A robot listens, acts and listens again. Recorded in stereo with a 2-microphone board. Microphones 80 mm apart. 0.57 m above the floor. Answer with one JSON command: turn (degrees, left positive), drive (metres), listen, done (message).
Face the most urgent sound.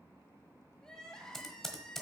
{"turn": 30}
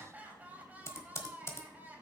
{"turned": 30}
{"turn": -20}
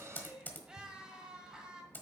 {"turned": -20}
{"turn": -10}
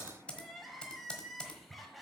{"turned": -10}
{"done": "Facing the crying, 1 to 2 m away."}